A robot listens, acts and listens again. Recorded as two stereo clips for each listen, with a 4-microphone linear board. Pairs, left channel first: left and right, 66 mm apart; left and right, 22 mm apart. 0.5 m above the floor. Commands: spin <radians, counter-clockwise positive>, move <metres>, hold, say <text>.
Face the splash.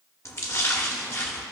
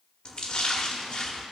spin 0.79
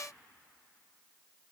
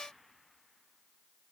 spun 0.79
hold
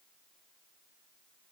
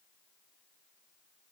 say I heard a splash, but can't make it out now. It was about straight ahead or 90° left.